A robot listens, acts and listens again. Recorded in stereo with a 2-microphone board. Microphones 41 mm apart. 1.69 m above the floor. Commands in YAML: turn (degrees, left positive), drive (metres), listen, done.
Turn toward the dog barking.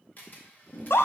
listen: true
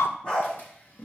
turn: 30
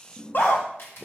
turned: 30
listen: true
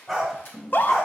done: "Found it: a dog barking, straight ahead, 2 to 4 m away."